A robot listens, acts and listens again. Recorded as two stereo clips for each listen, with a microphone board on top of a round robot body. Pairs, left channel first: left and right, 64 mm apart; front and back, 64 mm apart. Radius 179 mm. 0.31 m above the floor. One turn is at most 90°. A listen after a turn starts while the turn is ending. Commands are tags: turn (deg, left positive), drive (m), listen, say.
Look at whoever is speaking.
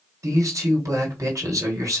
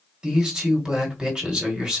<turn deg="-90"/>
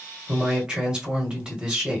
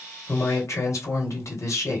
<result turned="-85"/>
<turn deg="-15"/>
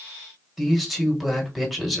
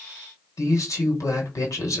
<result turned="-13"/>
<say>Facing the man speaking, 1 to 2 m away.</say>